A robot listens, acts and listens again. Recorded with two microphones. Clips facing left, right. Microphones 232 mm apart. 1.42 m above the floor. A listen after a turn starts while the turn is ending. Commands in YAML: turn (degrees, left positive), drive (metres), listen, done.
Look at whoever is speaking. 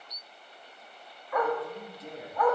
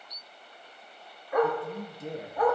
turn: -50
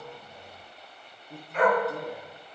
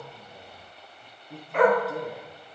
done: "Found it: a man speaking, straight ahead, 1 to 2 m away."